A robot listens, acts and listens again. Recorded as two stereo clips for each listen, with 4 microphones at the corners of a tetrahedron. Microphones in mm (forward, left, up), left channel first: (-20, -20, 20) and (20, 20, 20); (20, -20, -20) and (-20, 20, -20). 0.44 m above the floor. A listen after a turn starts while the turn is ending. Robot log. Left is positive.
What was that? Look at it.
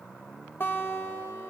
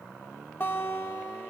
note: The guitar: 90° right.
cmd yaw -90
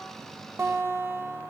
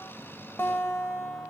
end: Found it: a guitar, straight ahead.